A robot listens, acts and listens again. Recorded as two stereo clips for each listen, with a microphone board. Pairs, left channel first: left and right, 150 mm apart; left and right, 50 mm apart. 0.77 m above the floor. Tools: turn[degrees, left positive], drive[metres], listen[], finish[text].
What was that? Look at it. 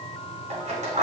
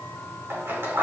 Thought: The scissors: about 55° right or 125° right.
Action: turn[-55]
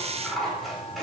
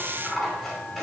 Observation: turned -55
Action: finish[Found it: scissors, straight ahead.]